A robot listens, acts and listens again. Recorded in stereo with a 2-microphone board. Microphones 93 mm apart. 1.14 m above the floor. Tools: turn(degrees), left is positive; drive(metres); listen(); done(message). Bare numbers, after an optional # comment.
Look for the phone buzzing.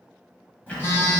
# The phone buzzing: about 25° left or 155° left.
turn(25)
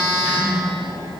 # So it is at 130° left.
turn(130)
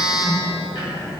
# The phone buzzing is now 10° right.
turn(-10)
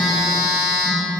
done("Facing the phone buzzing, 1 to 2 m away.")